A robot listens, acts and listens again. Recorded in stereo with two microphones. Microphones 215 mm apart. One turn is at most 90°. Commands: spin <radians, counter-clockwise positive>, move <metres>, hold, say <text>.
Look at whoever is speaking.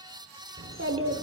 spin -1.22
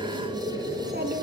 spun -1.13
spin -0.79
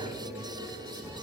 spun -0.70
hold
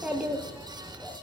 say Found it: a child speaking, straight ahead, 1 to 2 m away.